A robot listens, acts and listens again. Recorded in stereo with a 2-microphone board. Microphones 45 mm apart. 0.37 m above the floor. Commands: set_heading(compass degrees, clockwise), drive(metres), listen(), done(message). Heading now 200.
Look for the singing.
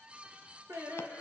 set_heading(290)
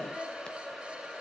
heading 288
done("Facing the singing.")